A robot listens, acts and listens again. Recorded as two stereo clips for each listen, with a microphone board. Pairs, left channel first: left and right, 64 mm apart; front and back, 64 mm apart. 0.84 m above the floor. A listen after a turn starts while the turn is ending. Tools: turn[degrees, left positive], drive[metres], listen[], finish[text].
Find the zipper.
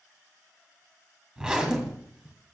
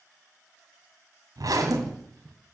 Thought: The zipper: 170° right.
Action: turn[-170]
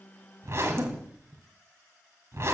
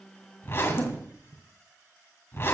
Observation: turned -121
Thought: The zipper is now 45° right.
Action: turn[-45]
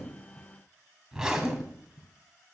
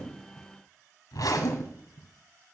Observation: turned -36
Thought: The zipper is now 10° right.
Action: turn[-10]
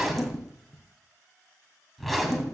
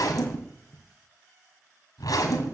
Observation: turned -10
Action: finish[Facing the zipper, 2 to 4 m away.]